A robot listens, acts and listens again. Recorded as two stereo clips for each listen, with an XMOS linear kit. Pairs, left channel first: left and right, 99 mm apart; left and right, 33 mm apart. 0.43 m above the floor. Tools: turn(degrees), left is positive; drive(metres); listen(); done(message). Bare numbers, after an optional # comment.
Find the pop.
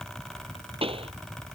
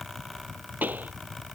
# The pop: about 70° right or 110° right.
turn(-70)
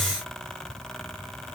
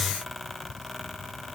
listen()
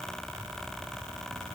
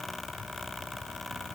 done("I heard a pop, but can't make it out now. It was about straight ahead or 40° right.")